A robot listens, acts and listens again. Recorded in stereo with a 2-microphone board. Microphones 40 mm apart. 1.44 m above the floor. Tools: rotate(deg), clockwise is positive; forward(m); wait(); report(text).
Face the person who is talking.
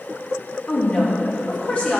rotate(-30)
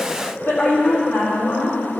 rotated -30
rotate(-110)
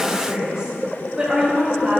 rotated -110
rotate(15)
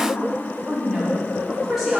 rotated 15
report("Facing the woman speaking, over 4 m away.")